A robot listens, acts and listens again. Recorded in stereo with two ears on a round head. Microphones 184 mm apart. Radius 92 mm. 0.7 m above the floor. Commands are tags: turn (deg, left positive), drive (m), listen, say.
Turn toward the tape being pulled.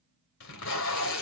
<turn deg="70"/>
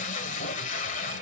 <turn deg="35"/>
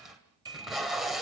<say>Found it: tape being pulled, straight ahead, 2 to 4 m away.</say>